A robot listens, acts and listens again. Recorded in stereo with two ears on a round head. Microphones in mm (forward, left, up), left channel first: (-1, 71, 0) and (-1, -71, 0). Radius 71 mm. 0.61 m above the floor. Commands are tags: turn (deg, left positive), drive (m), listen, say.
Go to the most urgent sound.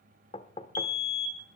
<turn deg="60"/>
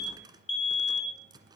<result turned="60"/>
<turn deg="45"/>
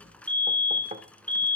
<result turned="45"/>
<turn deg="10"/>
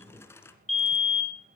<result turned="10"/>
<drive m="1.0"/>
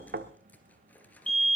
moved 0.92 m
<drive m="1.0"/>
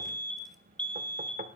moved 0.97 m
<turn deg="10"/>
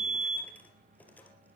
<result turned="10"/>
<drive m="1.0"/>
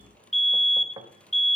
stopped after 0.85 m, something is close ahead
<say>Arrived at the fire alarm, straight ahead.</say>